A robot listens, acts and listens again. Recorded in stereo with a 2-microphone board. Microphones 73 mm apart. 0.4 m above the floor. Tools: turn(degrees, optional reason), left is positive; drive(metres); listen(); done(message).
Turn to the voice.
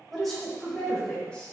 turn(degrees=15, reason="The woman speaking: about 15° left or 165° left.")
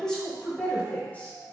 turn(degrees=20, reason="The woman speaking: about 20° left or 160° left.")
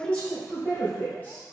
turn(degrees=25, reason="The woman speaking: about 25° left or 155° left.")
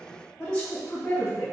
turn(degrees=20, reason="The woman speaking: about 20° left or 160° left.")
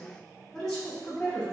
turn(degrees=30)
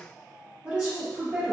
turn(degrees=-20, reason="So it is at 20° right.")
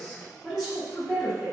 done("Facing the woman speaking, 2 to 4 m away.")